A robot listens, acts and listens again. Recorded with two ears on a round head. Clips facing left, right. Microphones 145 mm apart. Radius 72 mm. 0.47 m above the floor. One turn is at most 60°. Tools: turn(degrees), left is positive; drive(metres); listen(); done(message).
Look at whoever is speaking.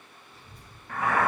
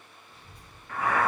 turn(degrees=-45)
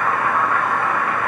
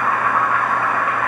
listen()
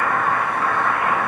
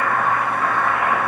listen()
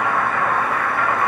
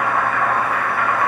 done("I heard a child speaking, but can't make it out now. It was about straight ahead or 90° right.")